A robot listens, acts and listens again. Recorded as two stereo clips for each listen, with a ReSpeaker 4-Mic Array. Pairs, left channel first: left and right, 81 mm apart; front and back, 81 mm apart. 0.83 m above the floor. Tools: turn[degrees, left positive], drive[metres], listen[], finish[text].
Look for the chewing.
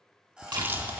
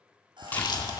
Thought: The chewing: 25° right.
Action: turn[-25]
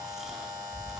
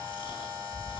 Action: finish[Found it: chewing, straight ahead.]